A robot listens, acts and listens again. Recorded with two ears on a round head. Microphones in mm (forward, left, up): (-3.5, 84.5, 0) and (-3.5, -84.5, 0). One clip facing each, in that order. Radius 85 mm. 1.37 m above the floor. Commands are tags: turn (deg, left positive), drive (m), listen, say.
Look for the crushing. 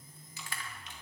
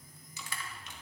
<turn deg="-90"/>
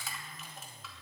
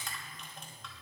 <say>Facing the crushing.</say>